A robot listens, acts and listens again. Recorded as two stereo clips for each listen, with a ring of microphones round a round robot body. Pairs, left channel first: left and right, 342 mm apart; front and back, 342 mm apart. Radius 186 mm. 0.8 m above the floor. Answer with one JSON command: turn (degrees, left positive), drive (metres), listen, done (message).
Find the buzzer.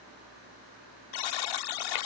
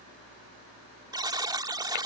{"turn": 100}
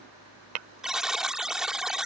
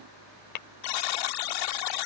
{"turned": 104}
{"done": "Facing the buzzer."}